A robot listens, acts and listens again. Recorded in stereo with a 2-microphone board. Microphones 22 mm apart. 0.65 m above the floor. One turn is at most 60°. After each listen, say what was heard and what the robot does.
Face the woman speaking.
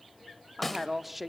Turn 30° right.
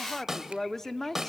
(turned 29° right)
So it is at 20° left. Turn 20° left.
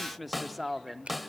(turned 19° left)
Facing the woman speaking.